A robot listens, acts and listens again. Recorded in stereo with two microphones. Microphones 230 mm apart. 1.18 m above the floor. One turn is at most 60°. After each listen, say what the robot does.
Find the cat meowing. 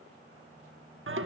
Keep listening.
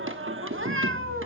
Turn 60° right.
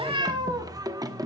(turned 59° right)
Turn 15° right.
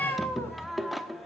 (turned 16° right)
Turn 10° left.
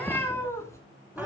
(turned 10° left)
Turn 10° left.
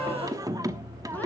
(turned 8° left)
Keep listening.
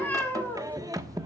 Turn 10° left.
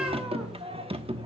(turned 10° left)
Keep listening.
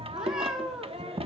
Facing the cat meowing, 2 to 4 m away.